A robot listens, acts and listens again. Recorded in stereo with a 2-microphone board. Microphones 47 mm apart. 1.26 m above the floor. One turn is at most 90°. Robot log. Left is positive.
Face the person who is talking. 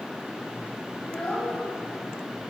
note: The child speaking: about 25° left or 155° left.
cmd yaw +25
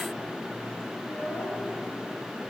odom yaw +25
note: So it is at 130° left.
cmd yaw +90
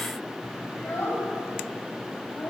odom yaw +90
note: The child speaking is now 55° left.
cmd yaw +55
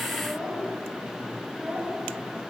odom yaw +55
note: The child speaking is now 10° right.
cmd yaw -10
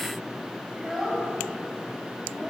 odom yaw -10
end: Facing the child speaking.